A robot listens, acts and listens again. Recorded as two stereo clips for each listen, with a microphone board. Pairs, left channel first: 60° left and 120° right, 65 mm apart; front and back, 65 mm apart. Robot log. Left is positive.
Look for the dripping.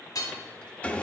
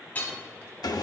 cmd idle
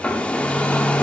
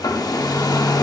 cmd idle
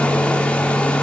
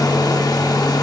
end: I can't make out dripping, only hammering and a hair dryer.